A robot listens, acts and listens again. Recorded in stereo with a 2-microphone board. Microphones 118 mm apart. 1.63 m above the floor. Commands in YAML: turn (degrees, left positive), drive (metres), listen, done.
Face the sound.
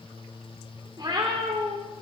turn: -45
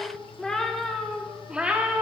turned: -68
turn: -15
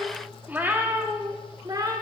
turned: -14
turn: -35
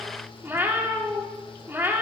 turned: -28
turn: -20
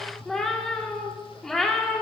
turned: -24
done: "Facing the cat meowing."